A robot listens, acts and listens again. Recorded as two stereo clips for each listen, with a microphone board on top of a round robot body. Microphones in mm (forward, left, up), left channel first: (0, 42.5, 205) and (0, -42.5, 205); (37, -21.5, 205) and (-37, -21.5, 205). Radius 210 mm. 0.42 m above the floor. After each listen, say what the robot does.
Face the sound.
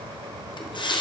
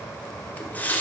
Turn 70° left.
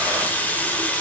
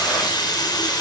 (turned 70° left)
Turn 20° left.
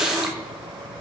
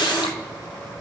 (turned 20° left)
Found it: a running tap, straight ahead, 1 to 2 m away.